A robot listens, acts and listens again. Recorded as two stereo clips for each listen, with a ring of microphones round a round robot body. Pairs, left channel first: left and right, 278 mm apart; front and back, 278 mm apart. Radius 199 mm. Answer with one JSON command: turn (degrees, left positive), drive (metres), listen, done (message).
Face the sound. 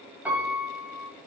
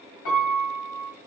{"done": "Facing the piano."}